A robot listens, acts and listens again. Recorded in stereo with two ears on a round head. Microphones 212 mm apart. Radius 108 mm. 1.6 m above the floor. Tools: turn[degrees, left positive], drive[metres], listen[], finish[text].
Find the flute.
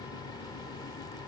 Action: listen[]
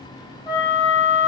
Thought: The flute: about 20° left or 160° left.
Action: turn[20]
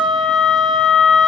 Thought: So it is at 140° left.
Action: turn[140]
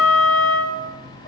Action: finish[Found it: a flute, straight ahead.]